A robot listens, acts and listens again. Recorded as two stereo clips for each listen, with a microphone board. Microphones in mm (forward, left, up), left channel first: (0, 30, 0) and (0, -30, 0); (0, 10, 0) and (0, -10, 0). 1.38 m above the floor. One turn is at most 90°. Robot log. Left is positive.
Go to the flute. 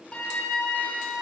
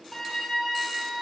note: The flute: about 20° left or 160° left.
cmd yaw +20
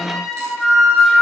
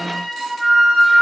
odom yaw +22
cmd fwd 1.0
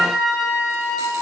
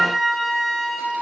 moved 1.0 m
note: The flute is now 10° right.
cmd yaw -10
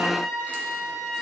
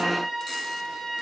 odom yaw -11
cmd fwd 1.0
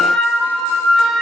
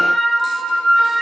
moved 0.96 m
cmd fwd 1.0
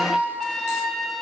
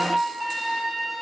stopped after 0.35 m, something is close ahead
end: I am next to the flute.